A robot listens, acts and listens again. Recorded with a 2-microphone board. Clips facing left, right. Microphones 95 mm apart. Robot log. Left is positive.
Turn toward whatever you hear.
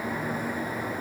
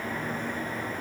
cmd idle
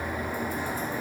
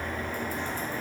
cmd idle
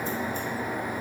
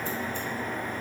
end: I can't make out anything to turn to.